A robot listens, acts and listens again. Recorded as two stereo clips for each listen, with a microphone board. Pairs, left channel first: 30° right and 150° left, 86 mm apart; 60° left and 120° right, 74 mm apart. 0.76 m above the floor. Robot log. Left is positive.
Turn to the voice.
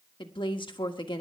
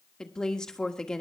note: The woman speaking: 20° right.
cmd yaw -20
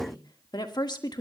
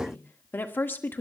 end: Facing the woman speaking.